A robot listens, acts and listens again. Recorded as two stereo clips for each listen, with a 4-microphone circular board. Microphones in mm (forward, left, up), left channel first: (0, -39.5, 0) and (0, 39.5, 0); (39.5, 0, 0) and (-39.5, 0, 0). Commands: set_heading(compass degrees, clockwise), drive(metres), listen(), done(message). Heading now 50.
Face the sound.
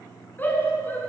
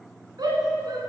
set_heading(205)
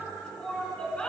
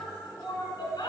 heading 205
set_heading(220)
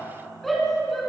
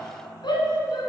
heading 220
done("Facing the shout.")